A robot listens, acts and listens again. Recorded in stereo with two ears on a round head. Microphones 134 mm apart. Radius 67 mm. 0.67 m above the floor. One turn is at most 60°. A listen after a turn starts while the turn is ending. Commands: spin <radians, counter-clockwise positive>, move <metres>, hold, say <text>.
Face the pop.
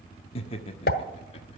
spin 1.05
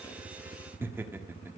hold
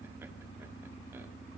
say I heard a pop, but can't make it out now. It was about 10° left or 50° left.